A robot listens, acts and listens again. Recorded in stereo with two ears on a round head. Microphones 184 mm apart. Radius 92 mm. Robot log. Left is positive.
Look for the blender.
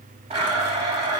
note: The blender: about 30° right or 150° right.
cmd yaw -30
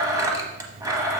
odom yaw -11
note: So it is at 20° right.
cmd yaw -20
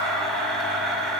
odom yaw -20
end: Found it: a blender, straight ahead, under 1 m away.